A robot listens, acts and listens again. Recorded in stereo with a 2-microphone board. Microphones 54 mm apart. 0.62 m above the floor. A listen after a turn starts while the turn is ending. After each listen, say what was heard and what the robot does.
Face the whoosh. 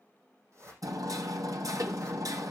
The whoosh: about 50° right or 130° right. Turn 50° right.
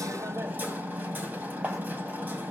Keep listening.
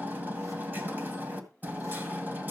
Keep listening.
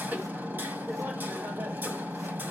I heard a whoosh, but can't make it out now. It was about straight ahead or 80° right.